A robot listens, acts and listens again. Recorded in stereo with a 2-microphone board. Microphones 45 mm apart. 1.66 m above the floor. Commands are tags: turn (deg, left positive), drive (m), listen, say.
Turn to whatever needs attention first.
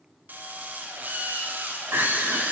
<turn deg="-70"/>
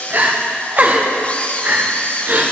<turn deg="-40"/>
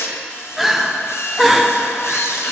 <say>Found it: crying, straight ahead.</say>